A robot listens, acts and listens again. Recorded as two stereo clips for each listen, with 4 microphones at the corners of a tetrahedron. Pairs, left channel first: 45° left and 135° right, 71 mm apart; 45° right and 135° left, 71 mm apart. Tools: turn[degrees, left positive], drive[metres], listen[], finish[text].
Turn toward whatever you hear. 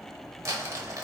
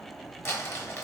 Thought: The crumpling: 95° right.
Action: turn[-95]
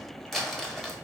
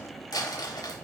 Thought: The crumpling is now 40° right.
Action: turn[-40]
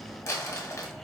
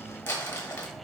Action: finish[Found it: crumpling, straight ahead, under 1 m away.]